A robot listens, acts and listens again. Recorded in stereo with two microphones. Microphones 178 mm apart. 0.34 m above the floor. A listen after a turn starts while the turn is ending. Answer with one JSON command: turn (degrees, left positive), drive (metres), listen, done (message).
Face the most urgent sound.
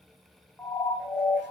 {"turn": 30}
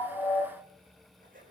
{"listen": true}
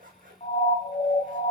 {"turn": 135}
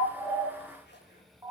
{"turn": -20}
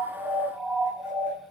{"done": "Facing the siren."}